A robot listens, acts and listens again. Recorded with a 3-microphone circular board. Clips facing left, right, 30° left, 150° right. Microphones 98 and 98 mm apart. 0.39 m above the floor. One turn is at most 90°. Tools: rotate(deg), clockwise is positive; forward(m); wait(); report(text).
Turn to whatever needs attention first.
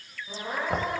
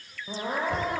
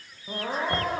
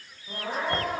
rotate(35)
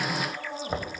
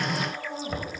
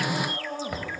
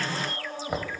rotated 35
report("Found it: crying, straight ahead, over 4 m away.")